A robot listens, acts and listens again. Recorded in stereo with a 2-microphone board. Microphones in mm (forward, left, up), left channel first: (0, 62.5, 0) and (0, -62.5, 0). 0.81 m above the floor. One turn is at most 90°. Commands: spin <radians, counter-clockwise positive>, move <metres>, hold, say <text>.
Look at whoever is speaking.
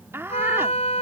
spin -0.35
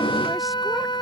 hold
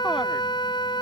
hold
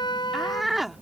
say Facing the woman speaking.